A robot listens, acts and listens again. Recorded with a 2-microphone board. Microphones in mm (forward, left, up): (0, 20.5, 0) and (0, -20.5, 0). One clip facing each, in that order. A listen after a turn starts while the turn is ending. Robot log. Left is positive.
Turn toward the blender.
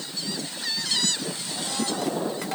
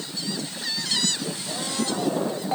cmd idle
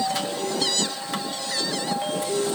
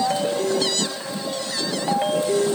note: The blender: about 75° right or 105° right.
cmd yaw -75
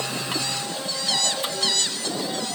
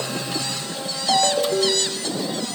end: Facing the blender.